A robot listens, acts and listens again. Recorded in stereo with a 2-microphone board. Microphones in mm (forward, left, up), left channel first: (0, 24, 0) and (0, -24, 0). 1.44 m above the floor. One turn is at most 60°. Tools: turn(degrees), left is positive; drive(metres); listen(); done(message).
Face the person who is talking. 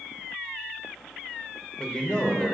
turn(degrees=20)
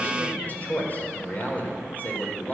turn(degrees=60)
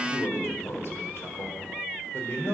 turn(degrees=60)
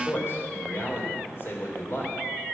turn(degrees=50)
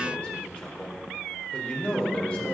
turn(degrees=20)
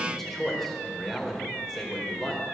done("Facing the man speaking, over 4 m away.")